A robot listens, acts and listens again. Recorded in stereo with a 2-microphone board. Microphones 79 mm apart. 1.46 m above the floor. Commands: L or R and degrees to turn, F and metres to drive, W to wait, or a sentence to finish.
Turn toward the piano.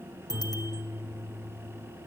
R30
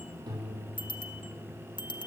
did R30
R120
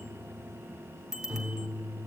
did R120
R20
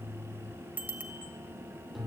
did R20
Facing the piano, over 4 m away.